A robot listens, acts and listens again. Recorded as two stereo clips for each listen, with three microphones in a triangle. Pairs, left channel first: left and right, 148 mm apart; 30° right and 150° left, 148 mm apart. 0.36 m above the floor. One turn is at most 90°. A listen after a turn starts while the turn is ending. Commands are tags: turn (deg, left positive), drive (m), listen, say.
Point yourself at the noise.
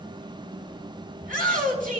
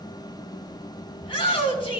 <turn deg="-80"/>
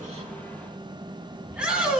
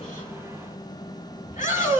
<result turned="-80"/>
<say>Facing the shout.</say>